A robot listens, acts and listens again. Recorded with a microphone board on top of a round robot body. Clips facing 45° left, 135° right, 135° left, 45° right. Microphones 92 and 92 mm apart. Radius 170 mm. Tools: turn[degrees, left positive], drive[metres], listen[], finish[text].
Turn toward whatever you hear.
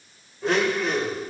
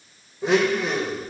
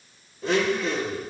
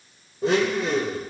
Thought: The blender: 60° right.
Action: turn[-60]
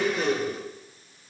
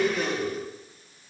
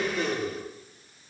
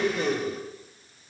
Thought: The blender is now 15° right.
Action: turn[-15]
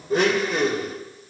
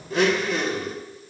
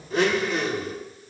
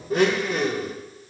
Action: finish[Found it: a blender, straight ahead, 2 to 4 m away.]